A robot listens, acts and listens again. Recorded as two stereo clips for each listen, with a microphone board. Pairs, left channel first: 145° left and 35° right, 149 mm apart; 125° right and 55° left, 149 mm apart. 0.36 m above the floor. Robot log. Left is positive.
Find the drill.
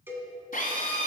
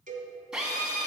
note: The drill: 140° left.
cmd yaw +140
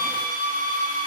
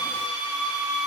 note: The drill is now 25° right.
cmd yaw -25
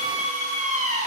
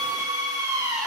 note: The drill is now 10° right.
cmd yaw -10
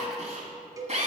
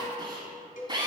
end: Found it: a drill, straight ahead.